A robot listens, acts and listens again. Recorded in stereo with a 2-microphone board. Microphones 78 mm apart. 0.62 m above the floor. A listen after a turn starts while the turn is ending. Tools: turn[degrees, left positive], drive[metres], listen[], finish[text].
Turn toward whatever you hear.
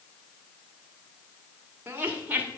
Thought: The laughter: about 20° right or 160° right.
Action: turn[-20]
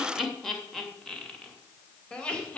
Thought: So it is at 15° left.
Action: turn[15]
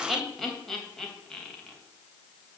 Action: finish[Facing the laughter.]